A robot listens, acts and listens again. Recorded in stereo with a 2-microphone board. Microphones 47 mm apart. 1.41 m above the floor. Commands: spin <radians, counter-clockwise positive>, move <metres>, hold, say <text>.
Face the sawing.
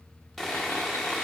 spin 0.52
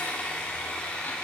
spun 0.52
spin 2.62
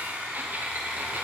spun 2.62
spin -0.52
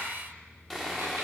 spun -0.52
say Facing the sawing.